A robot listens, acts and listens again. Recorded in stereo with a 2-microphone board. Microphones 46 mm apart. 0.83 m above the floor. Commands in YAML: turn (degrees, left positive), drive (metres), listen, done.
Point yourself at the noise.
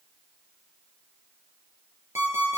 turn: -90
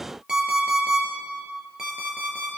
turn: -15
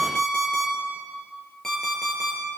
turn: 10
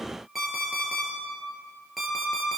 done: "Facing the alarm clock, over 4 m away."